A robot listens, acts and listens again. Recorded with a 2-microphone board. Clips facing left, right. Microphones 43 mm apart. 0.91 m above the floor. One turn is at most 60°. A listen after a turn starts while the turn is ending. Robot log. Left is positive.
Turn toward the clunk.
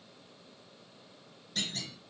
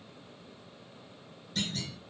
cmd yaw +30
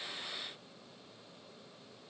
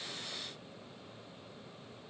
cmd idle
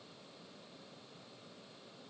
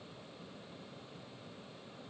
end: I heard a clunk, but can't make it out now. It was about 30° right or 150° left.